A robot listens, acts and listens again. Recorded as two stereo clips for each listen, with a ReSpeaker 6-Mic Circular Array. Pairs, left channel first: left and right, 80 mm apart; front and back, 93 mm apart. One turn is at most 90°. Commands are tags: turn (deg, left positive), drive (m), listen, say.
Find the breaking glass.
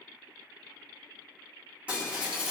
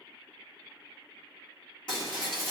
<turn deg="-15"/>
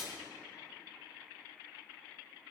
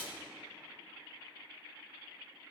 <say>Facing the breaking glass.</say>